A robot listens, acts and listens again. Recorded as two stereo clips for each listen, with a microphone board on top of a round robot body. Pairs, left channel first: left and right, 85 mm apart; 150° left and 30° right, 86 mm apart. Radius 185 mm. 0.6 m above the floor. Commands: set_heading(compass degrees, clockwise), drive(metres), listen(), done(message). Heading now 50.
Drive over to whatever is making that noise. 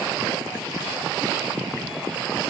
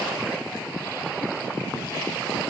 listen()
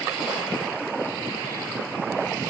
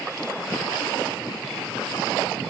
listen()
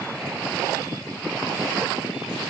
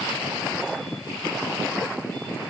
done("I can't make out anything to turn to.")